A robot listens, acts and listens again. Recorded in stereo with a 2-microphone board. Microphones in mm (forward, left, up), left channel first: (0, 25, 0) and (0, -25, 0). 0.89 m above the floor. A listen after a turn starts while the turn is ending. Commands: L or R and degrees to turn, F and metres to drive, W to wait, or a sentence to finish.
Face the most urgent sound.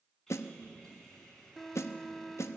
L30
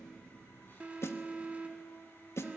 R25
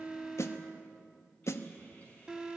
R15
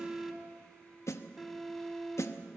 Facing the alarm.